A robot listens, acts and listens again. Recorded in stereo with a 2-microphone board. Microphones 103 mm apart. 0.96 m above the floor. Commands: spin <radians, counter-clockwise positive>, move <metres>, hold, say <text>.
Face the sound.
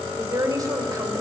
spin -0.61
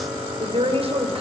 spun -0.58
spin -1.92
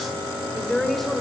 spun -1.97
say Found it: a woman speaking, straight ahead.